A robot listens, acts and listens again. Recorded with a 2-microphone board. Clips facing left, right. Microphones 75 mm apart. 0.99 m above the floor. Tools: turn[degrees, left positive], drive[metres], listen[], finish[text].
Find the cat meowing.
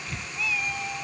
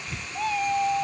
Thought: The cat meowing: about 40° right or 140° right.
Action: turn[-40]
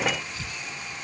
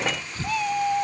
Thought: So it is at 110° right.
Action: turn[-110]
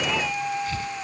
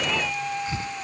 Action: finish[Found it: a cat meowing, straight ahead.]